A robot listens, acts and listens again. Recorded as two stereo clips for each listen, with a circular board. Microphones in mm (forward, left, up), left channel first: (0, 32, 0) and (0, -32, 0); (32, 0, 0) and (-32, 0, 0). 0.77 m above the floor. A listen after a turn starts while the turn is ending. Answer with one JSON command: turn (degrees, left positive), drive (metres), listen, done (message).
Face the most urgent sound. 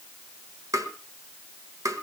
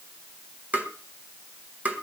{"listen": true}
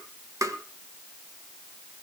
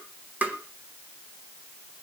{"listen": true}
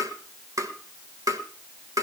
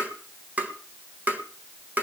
{"done": "I can't make out anything urgent to turn to."}